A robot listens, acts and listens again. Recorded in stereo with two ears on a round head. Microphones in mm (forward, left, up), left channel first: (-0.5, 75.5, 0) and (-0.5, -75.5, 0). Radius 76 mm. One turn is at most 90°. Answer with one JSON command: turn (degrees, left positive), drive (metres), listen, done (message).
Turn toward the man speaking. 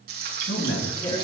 {"turn": 90}
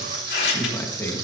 {"turn": 15}
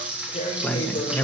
{"turn": 15}
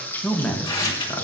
{"turn": 20}
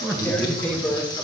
{"done": "Found it: a man speaking, straight ahead, 2 to 4 m away."}